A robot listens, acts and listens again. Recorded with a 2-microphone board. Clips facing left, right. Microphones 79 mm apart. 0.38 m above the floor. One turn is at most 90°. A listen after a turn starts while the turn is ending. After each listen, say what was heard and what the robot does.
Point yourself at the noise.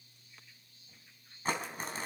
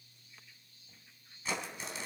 The crumpling: about 50° left or 130° left. Turn 50° left.
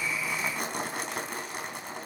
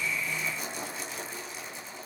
So it is at 80° left. Turn 80° left.
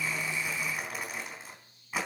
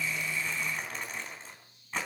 The crumpling is now 10° left. Turn 10° left.
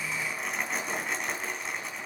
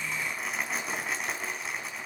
Found it: crumpling, straight ahead.